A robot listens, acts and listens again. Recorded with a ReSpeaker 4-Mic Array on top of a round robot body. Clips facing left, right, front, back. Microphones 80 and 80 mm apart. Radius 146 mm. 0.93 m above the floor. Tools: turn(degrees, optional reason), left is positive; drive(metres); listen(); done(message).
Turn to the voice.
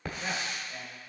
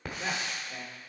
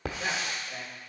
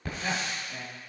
turn(degrees=-65, reason="The man speaking: 65° right.")
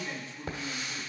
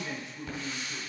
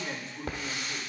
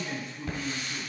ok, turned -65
turn(degrees=-20, reason="The man speaking is now 20° right.")
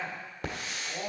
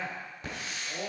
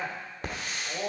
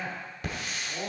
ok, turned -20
turn(degrees=10, reason="The man speaking is now 10° left.")
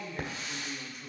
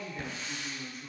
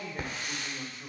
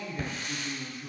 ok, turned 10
turn(degrees=10, reason="The man speaking is now 10° left.")
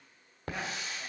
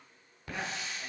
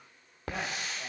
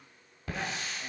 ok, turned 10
listen()
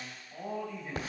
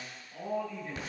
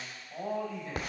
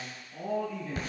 done("Found it: a man speaking, straight ahead, over 4 m away.")